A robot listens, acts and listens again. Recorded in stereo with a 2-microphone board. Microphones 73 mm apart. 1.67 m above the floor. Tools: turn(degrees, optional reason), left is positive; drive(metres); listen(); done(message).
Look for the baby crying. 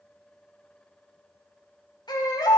turn(degrees=90)
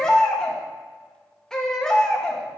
turn(degrees=10, reason="So it is at 10° left.")
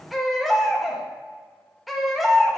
done("Facing the baby crying, 2 to 4 m away.")